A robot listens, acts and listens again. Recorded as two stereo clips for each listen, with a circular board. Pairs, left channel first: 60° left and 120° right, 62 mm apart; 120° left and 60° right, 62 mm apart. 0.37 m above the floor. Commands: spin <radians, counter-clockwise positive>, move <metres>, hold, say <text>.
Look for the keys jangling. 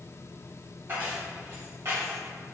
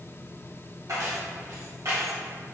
spin -1.48
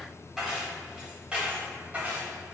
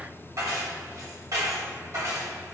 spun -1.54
spin -1.05
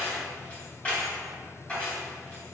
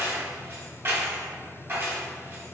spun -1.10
spin -0.17
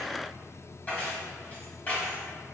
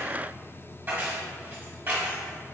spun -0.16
say Found it: keys jangling, straight ahead, 1 to 2 m away.